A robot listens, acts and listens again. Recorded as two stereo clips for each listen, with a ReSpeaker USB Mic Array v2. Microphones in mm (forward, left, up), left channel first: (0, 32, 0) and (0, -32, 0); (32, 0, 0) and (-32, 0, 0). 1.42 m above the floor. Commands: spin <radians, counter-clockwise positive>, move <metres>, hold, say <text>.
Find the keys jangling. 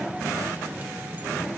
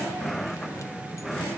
hold
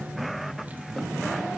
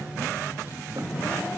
hold
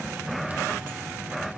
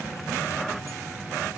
say I can't make out keys jangling to turn to.